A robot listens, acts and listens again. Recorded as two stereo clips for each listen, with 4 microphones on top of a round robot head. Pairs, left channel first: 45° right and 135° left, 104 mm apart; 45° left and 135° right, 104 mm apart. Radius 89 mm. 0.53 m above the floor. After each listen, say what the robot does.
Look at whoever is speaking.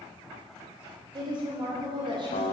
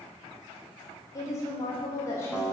Turn 105° left.
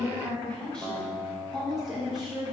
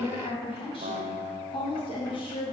Turn 55° left.
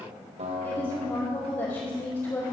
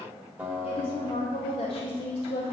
Turn 10° left.
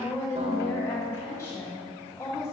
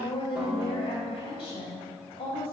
Found it: a woman speaking, straight ahead, 2 to 4 m away.